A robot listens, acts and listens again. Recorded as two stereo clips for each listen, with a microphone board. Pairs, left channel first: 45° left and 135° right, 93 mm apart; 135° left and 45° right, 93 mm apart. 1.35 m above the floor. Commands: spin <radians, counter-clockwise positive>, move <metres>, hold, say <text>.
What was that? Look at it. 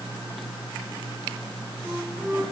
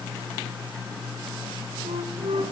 spin -1.05
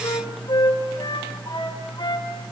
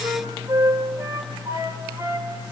spin 0.17
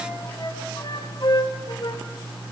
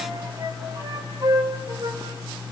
say Found it: a flute, straight ahead, 2 to 4 m away.